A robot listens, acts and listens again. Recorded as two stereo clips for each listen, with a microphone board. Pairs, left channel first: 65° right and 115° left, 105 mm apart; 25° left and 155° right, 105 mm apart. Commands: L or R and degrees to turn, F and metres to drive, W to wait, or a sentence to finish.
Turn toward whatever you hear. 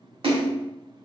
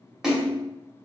L120
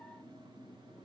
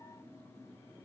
Facing where the splash came from. I can't hear it now.